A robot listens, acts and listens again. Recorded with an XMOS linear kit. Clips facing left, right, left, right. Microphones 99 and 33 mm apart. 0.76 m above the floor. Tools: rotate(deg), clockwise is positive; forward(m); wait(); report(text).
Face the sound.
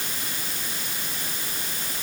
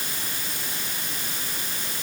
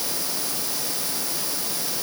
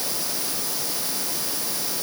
wait()
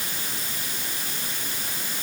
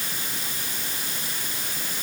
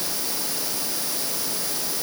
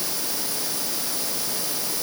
wait()
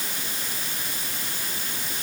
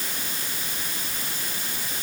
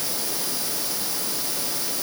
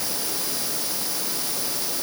report("I can't make out anything.")